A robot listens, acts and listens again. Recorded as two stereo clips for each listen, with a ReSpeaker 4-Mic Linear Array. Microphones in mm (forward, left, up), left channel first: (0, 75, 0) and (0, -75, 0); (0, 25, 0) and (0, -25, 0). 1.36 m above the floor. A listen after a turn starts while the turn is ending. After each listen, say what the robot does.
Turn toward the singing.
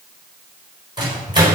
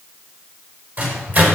Keep listening.
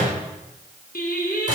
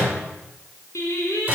Turn 70° left.
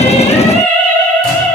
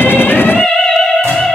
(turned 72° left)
Found it: singing, straight ahead, over 4 m away.